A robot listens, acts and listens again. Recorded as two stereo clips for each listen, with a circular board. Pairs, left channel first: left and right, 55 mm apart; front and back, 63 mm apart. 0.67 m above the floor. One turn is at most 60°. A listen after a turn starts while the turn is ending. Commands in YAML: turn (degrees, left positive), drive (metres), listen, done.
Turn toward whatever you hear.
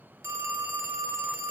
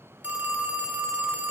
turn: -60
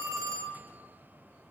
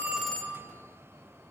turn: -60
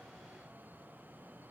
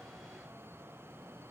turn: -10
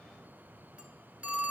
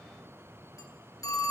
turn: -25
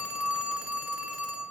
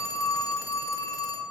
turn: -20
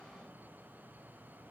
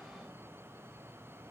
listen: true
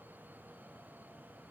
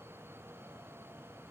listen: true
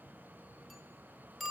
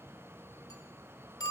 done: "Found it: a phone ringing, straight ahead, under 1 m away."